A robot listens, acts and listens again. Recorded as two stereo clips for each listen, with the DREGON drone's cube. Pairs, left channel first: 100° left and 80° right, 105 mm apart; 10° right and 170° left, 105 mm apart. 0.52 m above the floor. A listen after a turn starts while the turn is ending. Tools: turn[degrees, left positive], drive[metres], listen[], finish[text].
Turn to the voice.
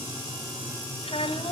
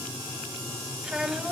Thought: The child speaking: 85° left.
Action: turn[85]
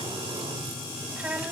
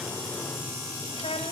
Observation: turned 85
Action: finish[Facing the child speaking.]